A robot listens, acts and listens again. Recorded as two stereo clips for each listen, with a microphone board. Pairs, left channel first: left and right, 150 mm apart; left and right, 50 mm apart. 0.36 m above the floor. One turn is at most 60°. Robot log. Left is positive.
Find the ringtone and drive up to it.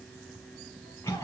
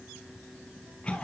cmd idle
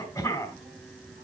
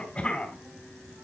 cmd idle
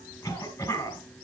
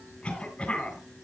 end: I can't make out a ringtone, only a cough.